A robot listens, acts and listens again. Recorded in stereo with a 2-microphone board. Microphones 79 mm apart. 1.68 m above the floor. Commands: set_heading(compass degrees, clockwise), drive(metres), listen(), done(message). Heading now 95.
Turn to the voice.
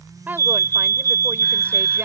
set_heading(120)
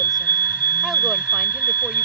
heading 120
listen()
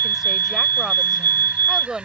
done("Found it: a woman speaking, straight ahead.")